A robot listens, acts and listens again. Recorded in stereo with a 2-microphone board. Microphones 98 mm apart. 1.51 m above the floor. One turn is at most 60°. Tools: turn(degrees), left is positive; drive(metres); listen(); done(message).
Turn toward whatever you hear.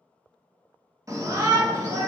turn(degrees=-35)
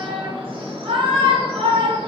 turn(degrees=-60)
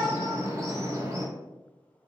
turn(degrees=-35)
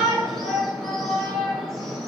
done("Facing the shout.")